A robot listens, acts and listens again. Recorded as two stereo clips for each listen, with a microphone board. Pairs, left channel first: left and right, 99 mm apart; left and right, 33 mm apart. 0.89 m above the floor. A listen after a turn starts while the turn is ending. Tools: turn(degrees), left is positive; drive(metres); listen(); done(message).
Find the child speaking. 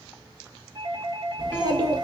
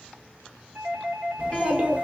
turn(degrees=-40)
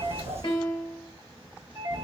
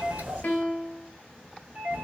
turn(degrees=-95)
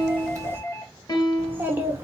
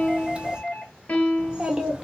turn(degrees=-20)
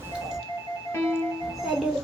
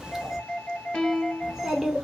done("Facing the child speaking.")